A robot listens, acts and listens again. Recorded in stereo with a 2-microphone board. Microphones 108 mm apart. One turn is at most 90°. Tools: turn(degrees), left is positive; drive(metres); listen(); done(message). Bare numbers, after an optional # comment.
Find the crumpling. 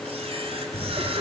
# The crumpling: about 40° left or 140° left.
turn(40)
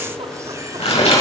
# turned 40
# So it is at 100° left.
turn(90)
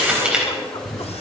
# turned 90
# The crumpling is now 10° right.
turn(-10)
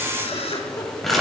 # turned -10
done("Found it: crumpling, straight ahead, over 4 m away.")